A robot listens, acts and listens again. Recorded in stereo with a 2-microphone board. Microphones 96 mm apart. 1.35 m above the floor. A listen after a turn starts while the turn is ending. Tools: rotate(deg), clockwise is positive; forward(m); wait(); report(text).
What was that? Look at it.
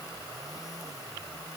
wait()
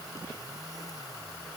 wait()
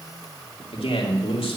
rotate(-90)
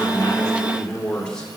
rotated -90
rotate(-10)
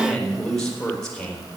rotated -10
rotate(-10)
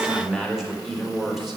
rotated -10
report("Found it: a man speaking, straight ahead, 2 to 4 m away.")